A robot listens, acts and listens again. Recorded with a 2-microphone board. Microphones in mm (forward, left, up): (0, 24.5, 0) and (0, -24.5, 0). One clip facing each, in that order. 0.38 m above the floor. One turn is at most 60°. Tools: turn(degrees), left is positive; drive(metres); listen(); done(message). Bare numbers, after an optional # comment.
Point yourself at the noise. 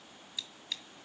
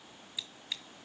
turn(-30)
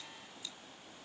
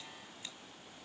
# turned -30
listen()
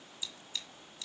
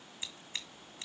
# So it is at 135° right.
turn(-60)
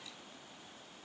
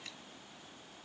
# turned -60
# Nothing new. It was at 75° right.
turn(-60)
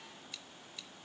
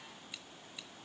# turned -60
# Nothing new. It was at 15° right.
turn(-15)
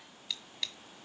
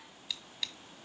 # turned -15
done("Facing the scissors, 1 to 2 m away.")